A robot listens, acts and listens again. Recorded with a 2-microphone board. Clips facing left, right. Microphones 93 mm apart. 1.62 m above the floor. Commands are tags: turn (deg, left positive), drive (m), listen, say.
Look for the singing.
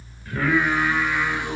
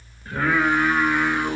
<turn deg="-30"/>
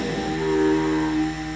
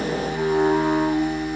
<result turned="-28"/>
<turn deg="-135"/>
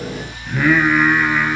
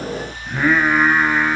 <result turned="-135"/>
<turn deg="-25"/>
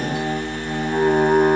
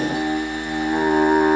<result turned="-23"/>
<say>Found it: singing, straight ahead, 2 to 4 m away.</say>